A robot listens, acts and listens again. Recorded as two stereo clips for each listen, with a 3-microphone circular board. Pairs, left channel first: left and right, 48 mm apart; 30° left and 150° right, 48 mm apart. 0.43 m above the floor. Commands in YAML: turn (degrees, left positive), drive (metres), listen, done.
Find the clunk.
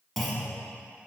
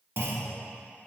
turn: 175
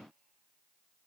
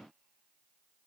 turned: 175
done: "I heard a clunk from this way, but can't make it out now."